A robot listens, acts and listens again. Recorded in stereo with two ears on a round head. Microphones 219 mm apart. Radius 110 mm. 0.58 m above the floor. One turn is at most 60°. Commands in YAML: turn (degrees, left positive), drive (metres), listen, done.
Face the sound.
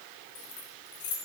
turn: 50
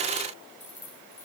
turn: 10
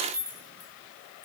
done: "Facing the keys jangling."